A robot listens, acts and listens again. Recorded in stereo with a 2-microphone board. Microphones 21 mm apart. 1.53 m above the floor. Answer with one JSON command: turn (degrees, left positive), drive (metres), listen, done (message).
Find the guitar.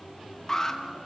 {"listen": true}
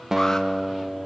{"turn": -20}
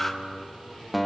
{"done": "Found it: a guitar, straight ahead, 1 to 2 m away."}